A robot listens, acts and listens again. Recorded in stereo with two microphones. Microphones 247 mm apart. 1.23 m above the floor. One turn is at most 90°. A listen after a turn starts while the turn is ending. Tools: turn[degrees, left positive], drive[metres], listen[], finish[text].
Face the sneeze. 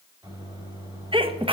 Thought: The sneeze: about 20° right or 160° right.
Action: turn[-20]
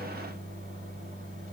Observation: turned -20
Action: listen[]
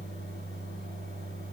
Action: finish[I heard a sneeze, but can't make it out now. It was about straight ahead or 140° right.]